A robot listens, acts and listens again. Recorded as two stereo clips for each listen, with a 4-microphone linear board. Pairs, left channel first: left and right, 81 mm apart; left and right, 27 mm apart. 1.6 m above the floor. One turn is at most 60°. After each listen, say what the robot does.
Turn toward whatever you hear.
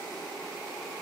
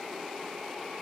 Keep listening.
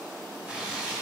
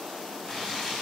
Turn 30° right.
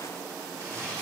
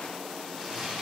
Turn 60° right.
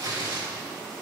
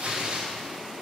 Turn 60° right.
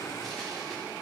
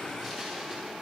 Keep listening.
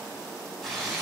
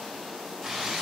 Found it: tearing paper, straight ahead, 2 to 4 m away.